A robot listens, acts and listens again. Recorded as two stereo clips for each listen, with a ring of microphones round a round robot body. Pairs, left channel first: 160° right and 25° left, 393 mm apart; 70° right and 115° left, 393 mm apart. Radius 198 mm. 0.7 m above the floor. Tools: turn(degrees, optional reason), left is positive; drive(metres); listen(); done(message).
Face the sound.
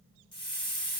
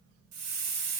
turn(degrees=125, reason="The hiss: 125° left.")
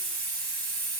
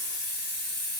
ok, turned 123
done("Found it: a hiss, straight ahead, 2 to 4 m away.")